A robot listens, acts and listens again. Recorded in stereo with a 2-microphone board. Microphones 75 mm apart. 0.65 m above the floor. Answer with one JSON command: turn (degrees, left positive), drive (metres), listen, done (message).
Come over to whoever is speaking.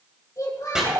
{"turn": 50}
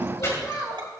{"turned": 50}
{"turn": 80}
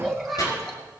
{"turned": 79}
{"drive": 1.0}
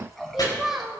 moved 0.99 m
{"drive": 1.0}
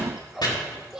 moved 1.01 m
{"turn": -10}
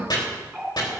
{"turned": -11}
{"listen": true}
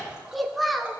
{"drive": 1.0}
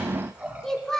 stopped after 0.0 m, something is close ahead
{"turn": 10}
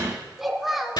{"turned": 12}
{"done": "Arrived at the child speaking, straight ahead."}